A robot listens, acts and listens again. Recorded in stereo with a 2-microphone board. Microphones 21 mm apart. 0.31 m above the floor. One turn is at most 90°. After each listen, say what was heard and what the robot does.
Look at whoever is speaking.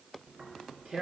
Keep listening.
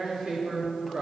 Keep listening.
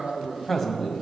Turn 30° left.
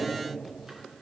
Keep listening.
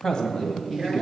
So it is at 130° left. Turn 90° left.
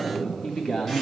The man speaking is now 75° left. Turn 75° left.
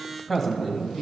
The man speaking is now 10° left. Turn 10° left.
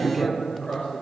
Found it: a man speaking, straight ahead, 1 to 2 m away.